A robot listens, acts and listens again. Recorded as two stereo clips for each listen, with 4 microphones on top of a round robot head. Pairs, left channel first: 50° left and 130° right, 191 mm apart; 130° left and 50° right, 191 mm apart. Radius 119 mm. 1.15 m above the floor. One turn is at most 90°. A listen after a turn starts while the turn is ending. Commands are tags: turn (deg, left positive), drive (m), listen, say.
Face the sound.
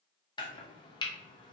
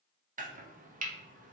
<turn deg="-15"/>
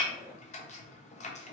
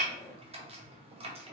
<say>Facing the chopping.</say>